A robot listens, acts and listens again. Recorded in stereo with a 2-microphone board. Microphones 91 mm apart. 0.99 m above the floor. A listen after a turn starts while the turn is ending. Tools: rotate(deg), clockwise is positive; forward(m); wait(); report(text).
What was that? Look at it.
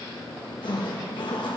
rotate(-60)
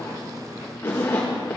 rotate(-30)
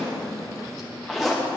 report("Facing the zipper, 1 to 2 m away.")